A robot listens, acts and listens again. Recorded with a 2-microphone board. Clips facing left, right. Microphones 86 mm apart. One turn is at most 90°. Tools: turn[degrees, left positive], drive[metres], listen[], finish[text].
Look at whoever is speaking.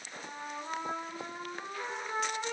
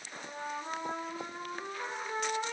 Action: listen[]
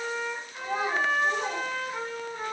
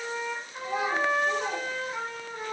Thought: The child speaking: about 40° left or 140° left.
Action: turn[40]
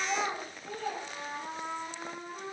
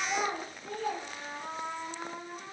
Action: finish[Facing the child speaking, under 1 m away.]